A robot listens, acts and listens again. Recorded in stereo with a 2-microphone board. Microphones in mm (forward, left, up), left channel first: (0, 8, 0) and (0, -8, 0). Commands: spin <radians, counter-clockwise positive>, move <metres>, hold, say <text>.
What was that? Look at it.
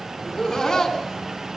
spin 0.52
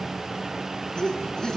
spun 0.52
spin 2.27
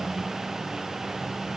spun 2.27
hold
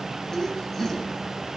spin 0.61
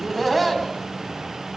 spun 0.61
spin 0.17
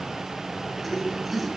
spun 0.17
say Facing the laughter.